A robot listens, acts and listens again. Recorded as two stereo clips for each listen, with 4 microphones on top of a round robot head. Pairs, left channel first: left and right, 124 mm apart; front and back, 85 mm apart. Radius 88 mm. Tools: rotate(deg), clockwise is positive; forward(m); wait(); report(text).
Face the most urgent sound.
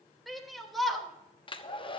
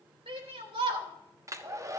rotate(-180)
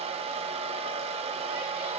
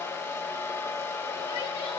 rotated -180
wait()
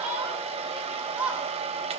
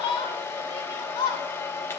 rotate(15)
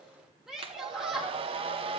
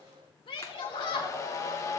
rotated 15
report("Facing the shout.")